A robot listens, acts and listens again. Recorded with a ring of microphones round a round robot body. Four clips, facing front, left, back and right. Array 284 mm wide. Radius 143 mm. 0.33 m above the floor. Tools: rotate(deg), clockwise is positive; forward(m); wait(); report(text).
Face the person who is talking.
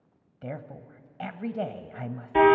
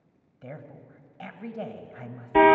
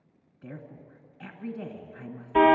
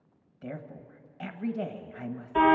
rotate(10)
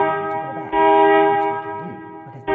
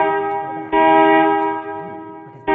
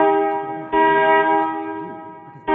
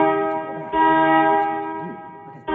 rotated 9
wait()
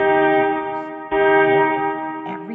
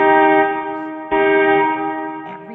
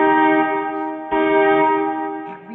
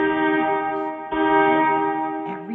report("Facing the woman speaking, 1 to 2 m away.")